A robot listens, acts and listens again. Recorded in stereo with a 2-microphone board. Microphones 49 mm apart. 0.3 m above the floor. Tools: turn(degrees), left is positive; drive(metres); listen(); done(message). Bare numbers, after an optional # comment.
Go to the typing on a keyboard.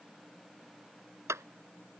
listen()
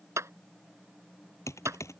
# The typing on a keyboard: about 75° left or 105° left.
turn(75)
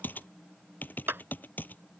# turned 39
# So it is at 35° left.
turn(35)
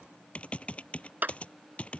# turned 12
# The typing on a keyboard is now 25° left.
turn(25)
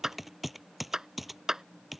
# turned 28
drive(1.0)
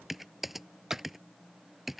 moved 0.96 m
drive(1.0)
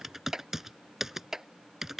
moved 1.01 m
# The typing on a keyboard is now 10° right.
turn(-10)
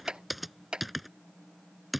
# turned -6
drive(1.0)
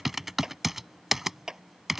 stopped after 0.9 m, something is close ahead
done("I am next to the typing on a keyboard.")